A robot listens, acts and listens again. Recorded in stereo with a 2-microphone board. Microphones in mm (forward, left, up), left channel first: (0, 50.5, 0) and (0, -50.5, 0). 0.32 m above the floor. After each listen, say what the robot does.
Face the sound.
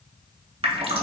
Turn 90° right.
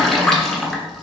Facing the dripping.